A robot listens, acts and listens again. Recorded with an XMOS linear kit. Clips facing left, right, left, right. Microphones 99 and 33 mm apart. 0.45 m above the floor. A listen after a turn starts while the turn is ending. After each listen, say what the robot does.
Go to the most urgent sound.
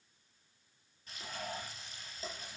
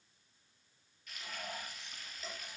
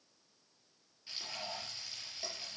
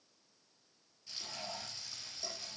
Keep listening.
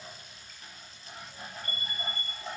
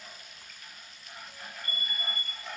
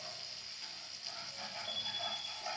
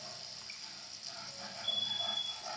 Turn 45° right.
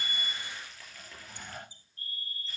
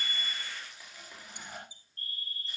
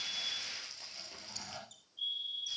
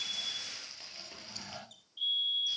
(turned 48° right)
Turn 80° right.
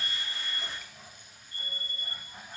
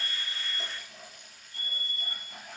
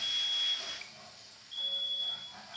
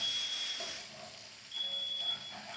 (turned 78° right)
Drive 1.0 m forward.
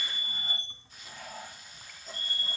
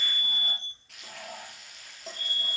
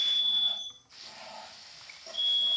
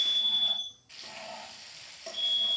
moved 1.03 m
Drive 1.0 m forward.
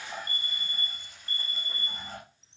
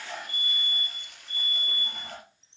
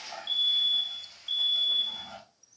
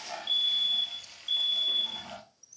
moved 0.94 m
Drive 1.0 m forward.
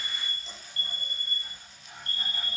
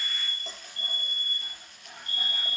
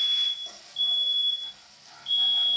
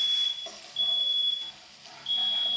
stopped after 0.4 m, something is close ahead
Turn 15° right.
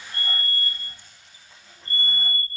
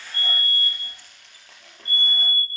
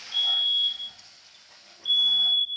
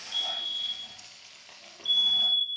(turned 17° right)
Arrived at the fire alarm, straight ahead.